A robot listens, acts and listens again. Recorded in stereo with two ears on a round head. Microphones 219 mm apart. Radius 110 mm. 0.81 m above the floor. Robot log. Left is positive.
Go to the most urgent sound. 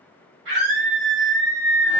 note: The scream: about 45° right or 135° right.
cmd yaw -45
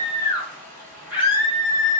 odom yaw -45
cmd fwd 1.0
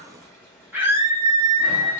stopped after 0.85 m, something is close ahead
note: The scream is now 10° right.
cmd yaw -10
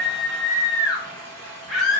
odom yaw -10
end: Arrived at the scream, straight ahead.